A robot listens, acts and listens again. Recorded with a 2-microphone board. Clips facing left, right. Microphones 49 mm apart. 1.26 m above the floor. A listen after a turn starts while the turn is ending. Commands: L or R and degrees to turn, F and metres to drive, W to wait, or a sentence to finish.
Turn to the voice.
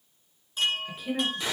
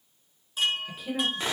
L30
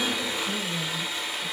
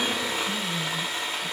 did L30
W
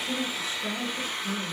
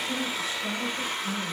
L155
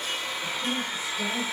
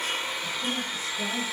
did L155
W
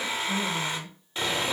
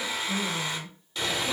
W
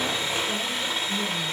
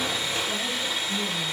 I heard a woman speaking from this way, but can't make it out now.